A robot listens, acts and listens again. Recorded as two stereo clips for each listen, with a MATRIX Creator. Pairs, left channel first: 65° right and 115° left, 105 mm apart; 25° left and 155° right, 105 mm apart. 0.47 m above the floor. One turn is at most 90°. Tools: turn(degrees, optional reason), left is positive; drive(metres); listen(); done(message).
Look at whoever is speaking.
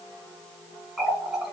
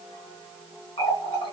listen()
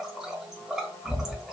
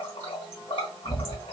listen()
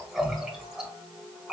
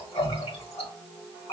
done("I can't make out anyone speaking, only a running tap.")